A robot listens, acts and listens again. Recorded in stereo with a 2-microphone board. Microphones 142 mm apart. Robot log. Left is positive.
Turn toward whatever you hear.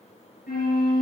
cmd yaw +90
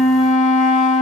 end: Found it: a flute, straight ahead.